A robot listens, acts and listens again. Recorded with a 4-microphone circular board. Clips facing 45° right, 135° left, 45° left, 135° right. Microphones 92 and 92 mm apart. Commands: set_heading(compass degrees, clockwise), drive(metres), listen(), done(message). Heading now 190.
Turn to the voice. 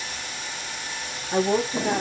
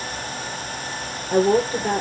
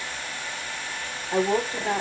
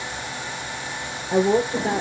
set_heading(20)
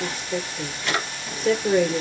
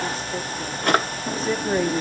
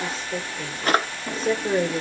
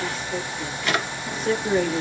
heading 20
set_heading(35)
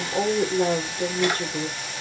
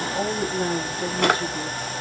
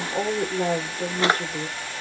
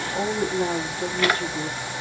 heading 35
done("Facing the woman speaking.")